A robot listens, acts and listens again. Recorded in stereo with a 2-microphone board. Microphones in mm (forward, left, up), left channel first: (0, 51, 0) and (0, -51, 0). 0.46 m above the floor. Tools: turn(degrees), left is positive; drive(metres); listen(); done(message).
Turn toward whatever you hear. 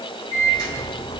turn(degrees=35)
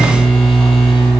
done("Facing the microwave, 2 to 4 m away.")